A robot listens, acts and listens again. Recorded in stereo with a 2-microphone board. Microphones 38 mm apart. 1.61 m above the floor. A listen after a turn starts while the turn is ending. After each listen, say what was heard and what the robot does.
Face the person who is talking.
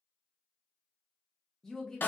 Turn 30° left.
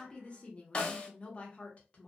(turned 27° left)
So it is at 145° left. Turn 145° left.
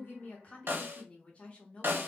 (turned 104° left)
The woman speaking is now 40° left. Turn 40° left.
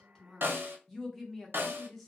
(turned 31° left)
Facing the woman speaking.